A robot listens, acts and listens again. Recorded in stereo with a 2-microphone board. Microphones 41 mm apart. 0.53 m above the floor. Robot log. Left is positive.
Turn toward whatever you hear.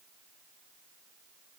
cmd idle
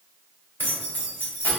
note: The keys jangling: about 60° left or 120° left.
cmd yaw +60
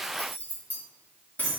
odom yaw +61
note: So it is at 35° left.
cmd yaw +35
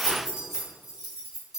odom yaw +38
note: The keys jangling is now 15° right.
cmd yaw -15
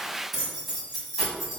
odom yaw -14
end: Found it: keys jangling, straight ahead, 2 to 4 m away.